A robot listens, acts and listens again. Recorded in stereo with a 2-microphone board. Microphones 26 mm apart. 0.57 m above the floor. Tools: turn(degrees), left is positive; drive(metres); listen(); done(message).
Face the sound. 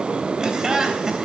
turn(degrees=-25)
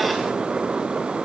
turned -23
listen()
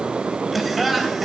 done("Facing the laughter, 2 to 4 m away.")